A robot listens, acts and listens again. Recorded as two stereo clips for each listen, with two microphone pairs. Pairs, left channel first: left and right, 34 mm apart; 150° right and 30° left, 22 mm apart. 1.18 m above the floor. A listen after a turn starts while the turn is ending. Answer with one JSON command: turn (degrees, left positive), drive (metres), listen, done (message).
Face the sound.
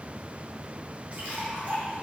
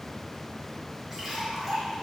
{"turn": -50}
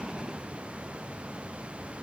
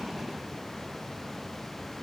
{"done": "I heard a splash from this way, but can't make it out now."}